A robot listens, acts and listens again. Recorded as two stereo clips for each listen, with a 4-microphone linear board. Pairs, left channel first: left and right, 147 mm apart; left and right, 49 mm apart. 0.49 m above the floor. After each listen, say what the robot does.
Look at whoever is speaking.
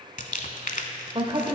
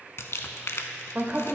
Turn 35° right.
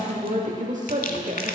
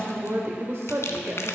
Turn 100° right.
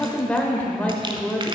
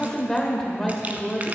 Turn 10° left.
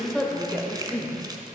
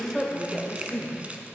Found it: a woman speaking, straight ahead, 1 to 2 m away.